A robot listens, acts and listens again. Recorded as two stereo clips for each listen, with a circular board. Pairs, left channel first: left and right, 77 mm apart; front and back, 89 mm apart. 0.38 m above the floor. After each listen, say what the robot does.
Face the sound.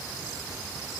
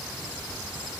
Keep listening.
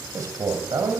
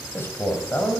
Turn 65° right.
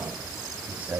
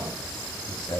Turn 25° right.
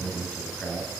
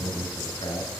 Turn 10° left.
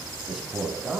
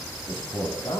Turn 10° right.
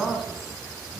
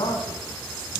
Found it: a man speaking, straight ahead.